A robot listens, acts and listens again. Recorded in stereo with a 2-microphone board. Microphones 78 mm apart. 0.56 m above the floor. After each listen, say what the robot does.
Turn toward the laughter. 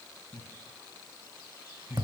Turn 40° right.
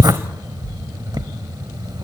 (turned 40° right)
Keep listening.
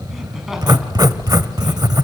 Keep listening.
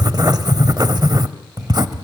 I heard laughter, but can't make it out now. It was about straight ahead or 100° right.